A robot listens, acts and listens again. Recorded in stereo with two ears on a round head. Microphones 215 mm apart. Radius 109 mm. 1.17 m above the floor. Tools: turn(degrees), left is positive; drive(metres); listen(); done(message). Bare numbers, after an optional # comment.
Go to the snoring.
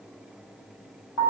listen()
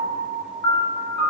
listen()
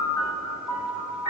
done("I can't make out snoring, only a piano.")